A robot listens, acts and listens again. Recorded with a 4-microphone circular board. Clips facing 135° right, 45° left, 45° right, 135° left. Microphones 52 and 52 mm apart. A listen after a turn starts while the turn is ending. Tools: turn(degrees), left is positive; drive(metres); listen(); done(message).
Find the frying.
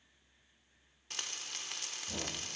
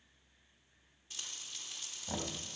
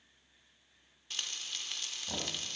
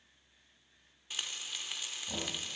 turn(degrees=-145)
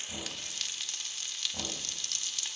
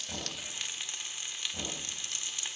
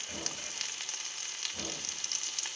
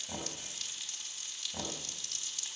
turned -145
turn(degrees=-20)
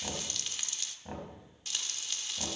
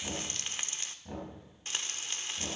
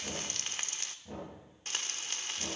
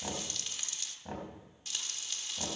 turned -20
done("Facing the frying.")